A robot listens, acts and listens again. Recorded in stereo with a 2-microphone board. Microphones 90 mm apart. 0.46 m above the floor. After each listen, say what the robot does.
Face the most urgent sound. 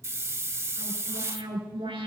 Turn 90° right.
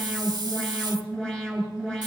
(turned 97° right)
Turn 10° left.
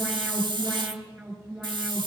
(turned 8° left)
Found it: an alarm, straight ahead, over 4 m away.